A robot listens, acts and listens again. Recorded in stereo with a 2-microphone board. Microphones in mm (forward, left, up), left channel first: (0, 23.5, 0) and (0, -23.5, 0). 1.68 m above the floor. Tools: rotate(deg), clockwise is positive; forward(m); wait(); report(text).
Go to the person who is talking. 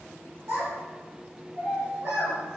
rotate(55)
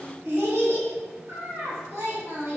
rotate(65)
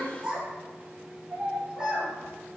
rotate(20)
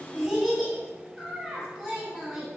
forward(1.0)
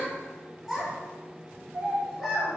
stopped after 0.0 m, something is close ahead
report("Blocked. The child speaking is further on, straight ahead.")